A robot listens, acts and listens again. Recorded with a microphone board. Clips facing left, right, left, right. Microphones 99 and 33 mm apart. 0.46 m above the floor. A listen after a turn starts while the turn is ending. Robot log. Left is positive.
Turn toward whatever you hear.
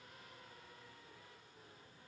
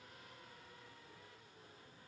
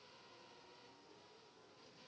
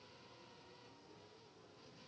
cmd idle
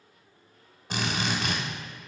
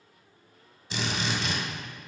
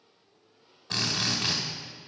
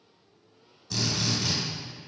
note: The drill: about 50° left or 130° left.
cmd yaw +50
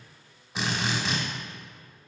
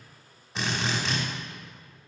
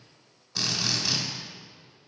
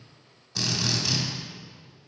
end: Found it: a drill, straight ahead, 1 to 2 m away.